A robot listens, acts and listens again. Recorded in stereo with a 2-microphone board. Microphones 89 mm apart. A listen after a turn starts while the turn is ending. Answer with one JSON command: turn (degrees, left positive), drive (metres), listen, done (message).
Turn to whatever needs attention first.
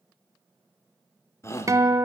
{"turn": 30}
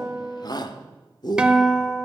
{"turn": 110}
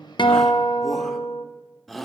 {"done": "Found it: a shout, straight ahead."}